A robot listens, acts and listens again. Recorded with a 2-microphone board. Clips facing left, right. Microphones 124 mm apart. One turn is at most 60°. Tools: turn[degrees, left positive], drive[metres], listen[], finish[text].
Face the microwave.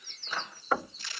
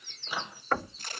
Action: turn[-30]
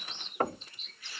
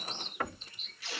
Action: listen[]
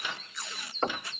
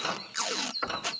Thought: So it is at 140° right.
Action: turn[-60]
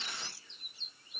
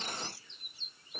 Thought: The microwave is now 75° right.
Action: turn[-60]
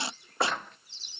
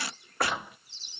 Thought: The microwave is now 10° right.
Action: turn[-10]
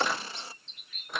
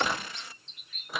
Action: finish[Found it: a microwave, straight ahead.]